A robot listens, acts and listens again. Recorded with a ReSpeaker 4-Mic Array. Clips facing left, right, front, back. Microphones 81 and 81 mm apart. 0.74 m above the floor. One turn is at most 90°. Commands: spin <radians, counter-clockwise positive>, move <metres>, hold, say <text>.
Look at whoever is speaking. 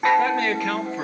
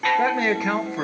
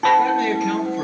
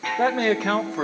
spin -1.57
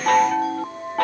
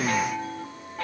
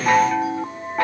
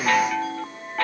spin -1.22
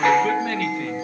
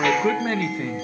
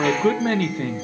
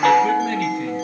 spin -0.52
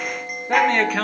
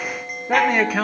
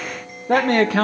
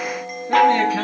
spin -0.17
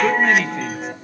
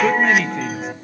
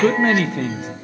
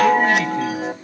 say Facing the man speaking.